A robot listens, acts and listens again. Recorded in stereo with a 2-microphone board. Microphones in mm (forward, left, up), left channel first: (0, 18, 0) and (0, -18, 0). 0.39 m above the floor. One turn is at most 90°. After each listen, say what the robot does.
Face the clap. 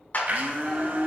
Turn 50° left.
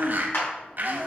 Turn 80° left.
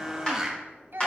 Turn 25° left.
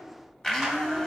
Keep listening.
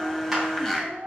Keep listening.
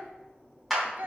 Found it: a clap, straight ahead.